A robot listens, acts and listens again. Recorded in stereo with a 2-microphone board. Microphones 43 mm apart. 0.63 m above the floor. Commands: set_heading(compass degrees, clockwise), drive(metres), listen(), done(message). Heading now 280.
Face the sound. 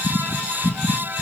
listen()
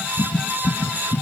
listen()
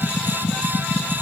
done("I can't make out anything.")